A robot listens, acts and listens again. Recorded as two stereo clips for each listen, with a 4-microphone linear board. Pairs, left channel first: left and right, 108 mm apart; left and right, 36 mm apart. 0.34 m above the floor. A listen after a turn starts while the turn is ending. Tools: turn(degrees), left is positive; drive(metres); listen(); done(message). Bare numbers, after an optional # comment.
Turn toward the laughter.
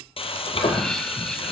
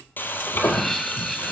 turn(30)
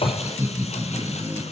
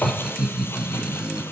# So it is at 25° right.
turn(-25)
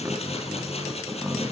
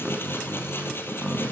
done("Found it: laughter, straight ahead.")